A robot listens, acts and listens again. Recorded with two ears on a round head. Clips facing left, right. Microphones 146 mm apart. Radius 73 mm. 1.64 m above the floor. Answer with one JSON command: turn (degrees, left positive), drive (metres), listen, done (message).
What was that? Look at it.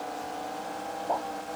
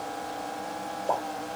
{"turn": -70}
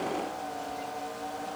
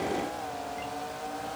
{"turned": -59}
{"listen": true}
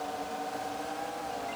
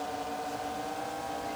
{"done": "I heard a pop, but can't make it out now. It was about 10° right or 50° right."}